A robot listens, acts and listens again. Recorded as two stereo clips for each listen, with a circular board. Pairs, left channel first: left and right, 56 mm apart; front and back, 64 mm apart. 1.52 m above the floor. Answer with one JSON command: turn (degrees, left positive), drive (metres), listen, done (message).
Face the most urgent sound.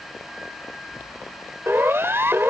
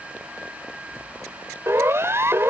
{"turn": -135}
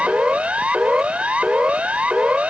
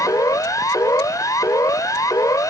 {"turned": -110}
{"turn": -25}
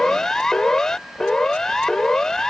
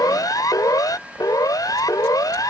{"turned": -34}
{"turn": 10}
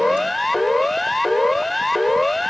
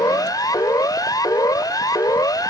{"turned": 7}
{"done": "Found it: a siren, straight ahead."}